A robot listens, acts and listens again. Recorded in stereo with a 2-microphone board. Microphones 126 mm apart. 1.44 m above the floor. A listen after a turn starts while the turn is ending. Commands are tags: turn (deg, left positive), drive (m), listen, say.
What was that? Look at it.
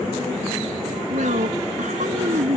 <turn deg="-90"/>
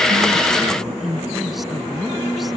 <say>Facing the woman speaking.</say>